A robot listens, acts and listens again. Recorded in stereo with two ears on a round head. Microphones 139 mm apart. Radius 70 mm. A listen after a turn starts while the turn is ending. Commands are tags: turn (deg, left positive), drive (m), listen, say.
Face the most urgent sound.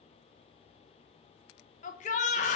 <turn deg="55"/>
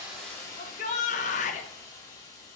<turn deg="60"/>
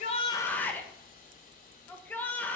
<turn deg="10"/>
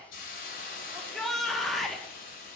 <say>Found it: a shout, straight ahead.</say>